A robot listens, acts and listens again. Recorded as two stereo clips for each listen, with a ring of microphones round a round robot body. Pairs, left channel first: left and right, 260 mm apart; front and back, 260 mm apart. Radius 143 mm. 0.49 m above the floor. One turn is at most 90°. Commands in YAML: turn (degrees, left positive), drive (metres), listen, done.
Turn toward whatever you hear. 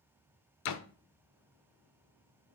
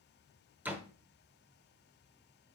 turn: 90
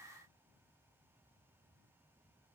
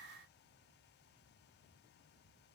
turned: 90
done: "I heard a door slam from this way, but can't make it out now."